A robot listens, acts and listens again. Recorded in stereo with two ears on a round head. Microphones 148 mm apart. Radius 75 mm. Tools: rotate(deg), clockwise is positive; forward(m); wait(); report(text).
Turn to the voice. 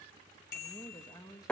rotate(-20)
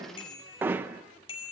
wait()
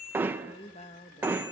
rotate(-140)
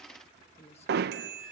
rotate(-40)
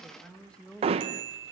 report("Facing the woman speaking.")